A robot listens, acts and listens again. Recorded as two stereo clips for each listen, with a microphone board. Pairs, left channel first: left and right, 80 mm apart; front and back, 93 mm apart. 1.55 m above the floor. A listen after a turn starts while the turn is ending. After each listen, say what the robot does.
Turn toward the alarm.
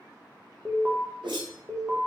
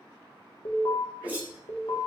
Turn 20° right.
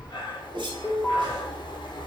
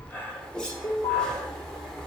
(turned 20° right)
Facing the alarm.